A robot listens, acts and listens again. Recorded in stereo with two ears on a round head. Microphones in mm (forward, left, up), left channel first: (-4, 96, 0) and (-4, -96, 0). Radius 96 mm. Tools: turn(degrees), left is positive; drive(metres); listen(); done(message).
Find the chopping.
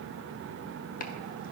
turn(degrees=40)
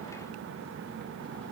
listen()
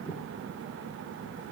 done("Facing the chopping.")